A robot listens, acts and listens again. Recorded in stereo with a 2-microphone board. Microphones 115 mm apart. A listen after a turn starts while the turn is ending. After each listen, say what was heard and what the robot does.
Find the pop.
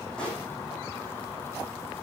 Turn 30° left.
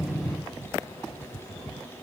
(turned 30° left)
Keep listening.
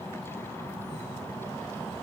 I heard a pop, but can't make it out now. It was about 20° right or 140° left.